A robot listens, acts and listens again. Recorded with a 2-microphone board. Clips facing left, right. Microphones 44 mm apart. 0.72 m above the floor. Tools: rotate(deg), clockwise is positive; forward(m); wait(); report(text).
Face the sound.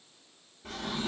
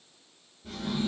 rotate(-75)
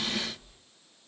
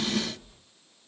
report("Found it: a drawer, straight ahead, 1 to 2 m away.")